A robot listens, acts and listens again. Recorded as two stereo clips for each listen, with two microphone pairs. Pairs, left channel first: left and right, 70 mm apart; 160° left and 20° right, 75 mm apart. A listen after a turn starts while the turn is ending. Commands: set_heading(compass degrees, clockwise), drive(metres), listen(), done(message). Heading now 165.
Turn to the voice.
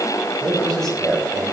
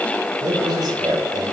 done("Facing the man speaking.")